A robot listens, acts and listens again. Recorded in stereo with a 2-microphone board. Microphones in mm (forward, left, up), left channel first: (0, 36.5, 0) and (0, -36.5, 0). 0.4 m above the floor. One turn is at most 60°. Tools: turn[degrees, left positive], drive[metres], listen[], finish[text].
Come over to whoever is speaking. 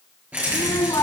Action: turn[60]
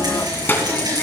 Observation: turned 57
Thought: So it is at 30° left.
Action: turn[30]
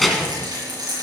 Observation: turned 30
Action: drive[1.0]
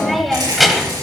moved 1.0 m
Action: drive[1.0]
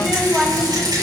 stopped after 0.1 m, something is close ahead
Action: finish[I am next to the child speaking.]